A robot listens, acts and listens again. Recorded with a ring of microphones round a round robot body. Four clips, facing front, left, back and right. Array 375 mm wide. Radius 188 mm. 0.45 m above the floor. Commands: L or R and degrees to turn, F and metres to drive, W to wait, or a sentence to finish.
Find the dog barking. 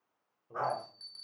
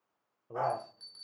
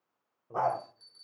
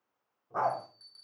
R140
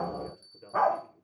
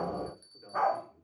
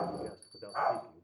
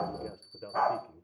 Found it: a dog barking, straight ahead.